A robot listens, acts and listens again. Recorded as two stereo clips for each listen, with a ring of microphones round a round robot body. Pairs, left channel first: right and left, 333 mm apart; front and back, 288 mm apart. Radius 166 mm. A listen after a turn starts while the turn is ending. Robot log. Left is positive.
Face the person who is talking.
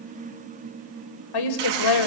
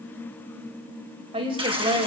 note: The woman speaking: 105° right.
cmd yaw -105
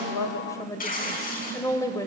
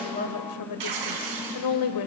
note: The woman speaking is now 10° right.
cmd yaw -10
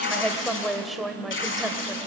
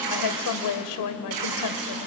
end: Found it: a woman speaking, straight ahead.